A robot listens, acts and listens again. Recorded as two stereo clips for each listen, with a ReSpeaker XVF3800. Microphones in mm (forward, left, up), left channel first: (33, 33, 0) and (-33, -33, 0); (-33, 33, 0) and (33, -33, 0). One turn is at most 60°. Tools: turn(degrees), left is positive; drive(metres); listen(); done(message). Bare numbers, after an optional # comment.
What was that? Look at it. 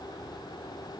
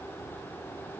listen()
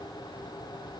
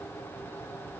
listen()
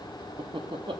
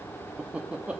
# The laughter: 120° right.
turn(-60)
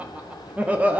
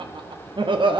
# The laughter is now 60° right.
turn(-60)
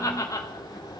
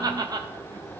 done("Facing the laughter, under 1 m away.")